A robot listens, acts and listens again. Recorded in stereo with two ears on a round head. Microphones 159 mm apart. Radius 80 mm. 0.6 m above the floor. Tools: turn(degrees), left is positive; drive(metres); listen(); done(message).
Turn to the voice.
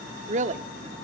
turn(degrees=-40)
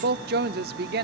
turn(degrees=-90)
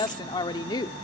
turn(degrees=30)
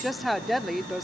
done("Found it: a woman speaking, straight ahead.")